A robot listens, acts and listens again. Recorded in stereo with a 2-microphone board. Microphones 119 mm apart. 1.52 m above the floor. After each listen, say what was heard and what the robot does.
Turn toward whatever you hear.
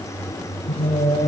Turn 90° left.
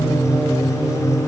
So it is at 15° right. Turn 15° right.
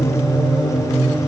Facing the singing, 2 to 4 m away.